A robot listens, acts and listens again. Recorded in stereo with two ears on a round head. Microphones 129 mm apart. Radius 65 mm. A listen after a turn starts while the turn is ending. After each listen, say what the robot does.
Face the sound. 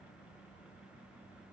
Keep listening.
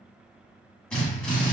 Turn 30° left.
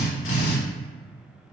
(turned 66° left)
Turn 105° left.
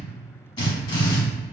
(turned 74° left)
Turn 30° left.
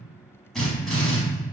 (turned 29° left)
Found it: a drill, straight ahead.